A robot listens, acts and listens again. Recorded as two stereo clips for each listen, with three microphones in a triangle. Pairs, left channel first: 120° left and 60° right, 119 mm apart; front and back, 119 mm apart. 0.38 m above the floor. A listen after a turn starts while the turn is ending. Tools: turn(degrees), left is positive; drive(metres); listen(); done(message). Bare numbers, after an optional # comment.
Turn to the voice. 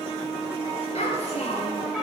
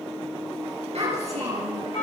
# The child speaking: 150° left.
turn(150)
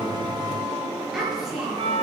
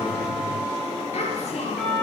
# The child speaking is now 25° left.
turn(25)
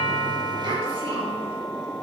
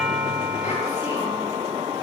listen()
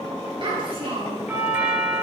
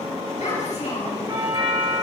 # The child speaking is now 15° right.
turn(-15)
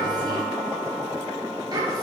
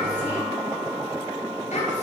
done("Found it: a child speaking, straight ahead, over 4 m away.")